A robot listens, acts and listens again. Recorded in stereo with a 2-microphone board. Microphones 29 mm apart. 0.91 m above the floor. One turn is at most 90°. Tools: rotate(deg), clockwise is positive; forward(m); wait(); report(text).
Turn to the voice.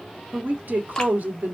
rotate(70)
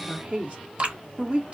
rotate(40)
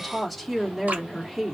report("Facing the woman speaking, 1 to 2 m away.")